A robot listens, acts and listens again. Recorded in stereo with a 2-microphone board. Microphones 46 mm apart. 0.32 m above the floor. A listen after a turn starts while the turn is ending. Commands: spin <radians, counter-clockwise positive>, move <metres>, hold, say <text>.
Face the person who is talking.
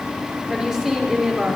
spin -0.26
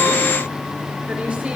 hold
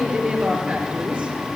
spin -2.53
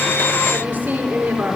spin -0.70
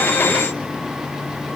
hold
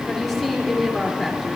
say Facing the woman speaking.